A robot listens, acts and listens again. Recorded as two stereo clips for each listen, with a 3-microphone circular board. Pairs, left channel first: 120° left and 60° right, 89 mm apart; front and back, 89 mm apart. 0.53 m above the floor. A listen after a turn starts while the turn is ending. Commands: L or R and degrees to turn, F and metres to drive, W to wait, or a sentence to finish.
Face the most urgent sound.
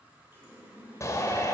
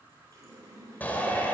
L65
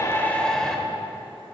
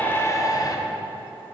L35
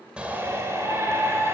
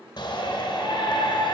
Facing the shout.